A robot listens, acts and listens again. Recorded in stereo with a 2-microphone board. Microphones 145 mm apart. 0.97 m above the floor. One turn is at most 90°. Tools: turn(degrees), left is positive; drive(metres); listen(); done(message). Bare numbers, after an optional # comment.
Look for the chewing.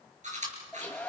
# The chewing: about 60° right or 120° right.
turn(-60)
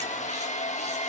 listen()
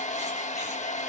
listen()
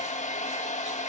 done("I heard chewing, but can't make it out now. It was about straight ahead or 60° right.")